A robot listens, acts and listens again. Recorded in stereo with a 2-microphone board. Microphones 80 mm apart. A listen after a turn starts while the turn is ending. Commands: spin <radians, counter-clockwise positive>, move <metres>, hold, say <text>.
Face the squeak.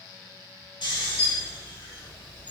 spin 0.35
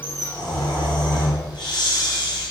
spin 2.36
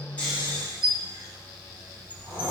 spin 0.35
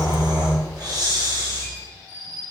say Facing the squeak, 2 to 4 m away.